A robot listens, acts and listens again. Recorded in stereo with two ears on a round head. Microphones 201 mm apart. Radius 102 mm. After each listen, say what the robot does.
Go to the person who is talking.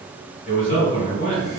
Turn 35° left.
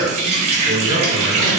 Turn 100° left.
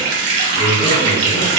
Turn 25° left.
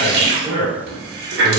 Turn 15° left.
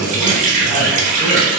Drive 1.0 m forward.
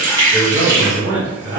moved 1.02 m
Turn 20° right.
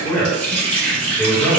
Drive 1.0 m forward.
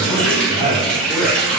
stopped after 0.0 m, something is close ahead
Turn 10° left.
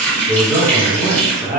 I am next to the man speaking.